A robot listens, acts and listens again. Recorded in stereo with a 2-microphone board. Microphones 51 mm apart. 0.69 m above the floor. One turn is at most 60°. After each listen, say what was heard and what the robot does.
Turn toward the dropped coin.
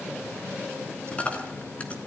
The dropped coin: about 30° left or 150° left. Turn 30° left.
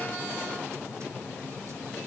Keep listening.
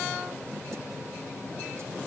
I heard a dropped coin, but can't make it out now. It was about straight ahead or 120° left.